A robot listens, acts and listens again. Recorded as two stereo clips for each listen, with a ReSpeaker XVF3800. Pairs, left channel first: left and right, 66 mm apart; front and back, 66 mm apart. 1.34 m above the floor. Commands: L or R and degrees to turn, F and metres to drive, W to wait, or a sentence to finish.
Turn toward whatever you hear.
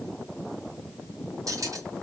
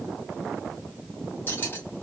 R60
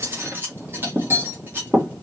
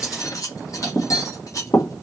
R35
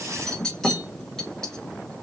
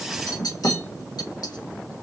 L10
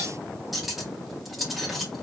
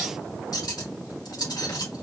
Found it: cutlery clinking, straight ahead, 1 to 2 m away.